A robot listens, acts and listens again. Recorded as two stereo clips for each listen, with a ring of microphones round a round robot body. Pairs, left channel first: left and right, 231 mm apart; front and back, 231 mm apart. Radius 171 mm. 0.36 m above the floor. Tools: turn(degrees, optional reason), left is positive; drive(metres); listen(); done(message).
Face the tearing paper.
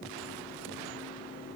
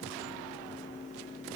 listen()
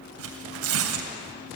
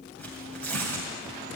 turn(degrees=-85, reason="The tearing paper: 85° right.")
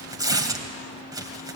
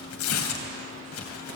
turn(degrees=-15, reason="The tearing paper is now 15° right.")
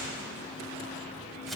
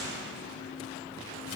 listen()
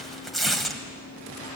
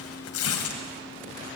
done("Found it: tearing paper, straight ahead.")